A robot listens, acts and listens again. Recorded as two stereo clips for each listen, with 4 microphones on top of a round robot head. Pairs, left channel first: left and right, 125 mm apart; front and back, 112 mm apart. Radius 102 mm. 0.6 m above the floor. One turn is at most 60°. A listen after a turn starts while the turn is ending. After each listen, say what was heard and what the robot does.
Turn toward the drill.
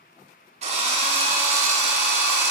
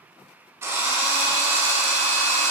The drill: 110° right. Turn 60° right.
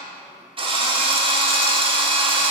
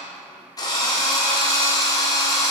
The drill is now 50° right. Turn 50° right.
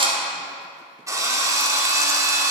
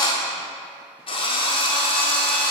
The drill is now 30° right. Turn 30° right.
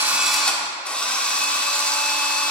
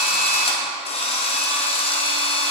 The drill is now 10° left. Turn 10° left.
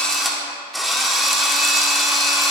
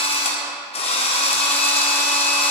Found it: a drill, straight ahead, 1 to 2 m away.